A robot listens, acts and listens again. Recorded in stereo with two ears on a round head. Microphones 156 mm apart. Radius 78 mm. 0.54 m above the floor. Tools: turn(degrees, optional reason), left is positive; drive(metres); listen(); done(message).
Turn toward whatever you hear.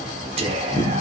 turn(degrees=-35, reason="The whispering: about 35° right or 145° right.")
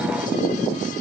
listen()
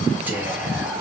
turn(degrees=-10, reason="So it is at 10° right.")
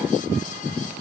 listen()
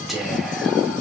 done("Found it: whispering, straight ahead.")